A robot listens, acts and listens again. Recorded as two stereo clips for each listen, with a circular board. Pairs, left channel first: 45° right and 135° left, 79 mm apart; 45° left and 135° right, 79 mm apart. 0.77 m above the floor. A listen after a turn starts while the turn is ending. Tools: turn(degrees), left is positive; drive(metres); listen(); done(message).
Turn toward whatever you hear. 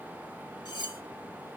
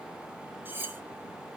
turn(degrees=-70)
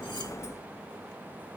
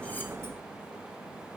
listen()
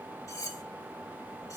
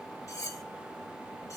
done("Found it: cutlery clinking, straight ahead.")